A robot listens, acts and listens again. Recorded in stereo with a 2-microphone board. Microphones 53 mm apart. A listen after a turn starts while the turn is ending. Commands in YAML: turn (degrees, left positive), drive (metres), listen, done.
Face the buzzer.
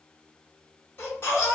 listen: true
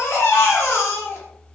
listen: true
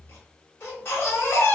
done: "I can't make out a buzzer to turn to."